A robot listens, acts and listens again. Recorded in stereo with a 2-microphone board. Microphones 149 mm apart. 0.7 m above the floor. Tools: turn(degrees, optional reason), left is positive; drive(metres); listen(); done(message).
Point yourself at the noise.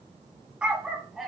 turn(degrees=30)
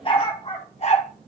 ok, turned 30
turn(degrees=130, reason="So it is at 130° left.")
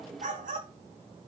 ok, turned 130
turn(degrees=-65, reason="The dog barking is now 65° right.")
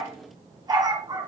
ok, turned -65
turn(degrees=-25, reason="The dog barking is now 25° right.")
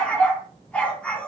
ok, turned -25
turn(degrees=10, reason="The dog barking is now 10° left.")
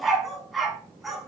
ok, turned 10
done("Found it: a dog barking, straight ahead, 1 to 2 m away.")